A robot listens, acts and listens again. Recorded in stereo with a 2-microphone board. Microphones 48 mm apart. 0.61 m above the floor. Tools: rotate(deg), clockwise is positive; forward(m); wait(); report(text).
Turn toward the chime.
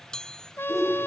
rotate(-15)
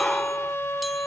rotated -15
wait()
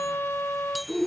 wait()
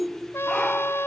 report("I heard a chime, but can't make it out now. It was about straight ahead or 150° left.")